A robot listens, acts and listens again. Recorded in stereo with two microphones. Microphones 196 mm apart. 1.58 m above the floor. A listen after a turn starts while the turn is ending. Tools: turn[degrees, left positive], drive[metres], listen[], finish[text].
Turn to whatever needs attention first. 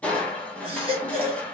Thought: The baby crying: about 25° right or 155° right.
Action: turn[-25]
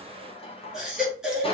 Action: finish[Facing the baby crying, 1 to 2 m away.]